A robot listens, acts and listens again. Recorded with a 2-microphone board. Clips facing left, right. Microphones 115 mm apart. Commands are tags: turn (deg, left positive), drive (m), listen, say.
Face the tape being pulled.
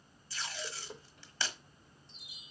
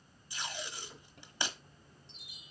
<turn deg="-15"/>
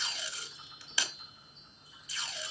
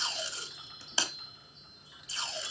<turn deg="-150"/>
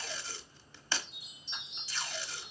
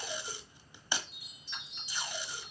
<turn deg="-15"/>
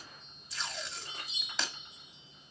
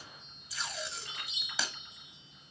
<say>Found it: tape being pulled, straight ahead.</say>